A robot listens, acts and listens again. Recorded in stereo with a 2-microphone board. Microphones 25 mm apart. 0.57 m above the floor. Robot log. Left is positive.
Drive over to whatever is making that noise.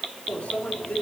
cmd yaw +90
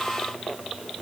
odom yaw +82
note: Nothing new. It was at 10° left.
cmd yaw +10
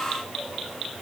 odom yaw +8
cmd idle
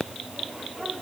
note: The microwave is now 10° right.
cmd yaw -10
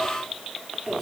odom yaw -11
cmd fwd 1.0
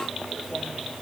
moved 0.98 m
cmd fwd 1.0
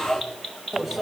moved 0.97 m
cmd fwd 1.0
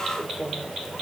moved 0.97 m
cmd fwd 1.0
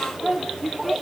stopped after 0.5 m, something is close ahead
end: Arrived at the microwave, straight ahead.